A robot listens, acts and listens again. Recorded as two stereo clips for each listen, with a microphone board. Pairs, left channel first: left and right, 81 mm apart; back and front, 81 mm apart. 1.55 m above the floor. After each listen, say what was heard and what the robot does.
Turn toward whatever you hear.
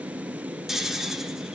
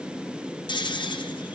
The snoring: 175° right. Turn 175° right.
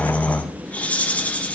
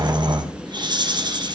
The snoring is now 20° left. Turn 20° left.
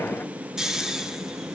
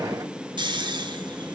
Facing the snoring.